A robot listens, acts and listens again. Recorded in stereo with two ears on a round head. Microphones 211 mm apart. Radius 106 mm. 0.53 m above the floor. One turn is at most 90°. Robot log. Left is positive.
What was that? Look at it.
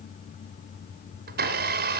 note: The blender: about 45° right or 135° right.
cmd yaw -45
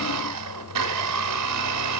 note: So it is at 90° right.
cmd yaw -90
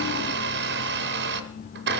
note: The blender is now 45° right.
cmd yaw -45
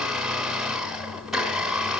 end: Facing the blender.